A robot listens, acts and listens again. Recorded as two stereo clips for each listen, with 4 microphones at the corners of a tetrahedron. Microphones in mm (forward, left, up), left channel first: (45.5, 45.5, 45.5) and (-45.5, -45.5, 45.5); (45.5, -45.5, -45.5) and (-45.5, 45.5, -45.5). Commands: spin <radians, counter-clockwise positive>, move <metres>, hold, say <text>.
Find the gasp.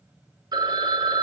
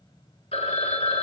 hold
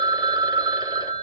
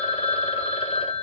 hold
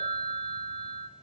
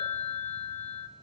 say I can't make out a gasp, only a phone ringing.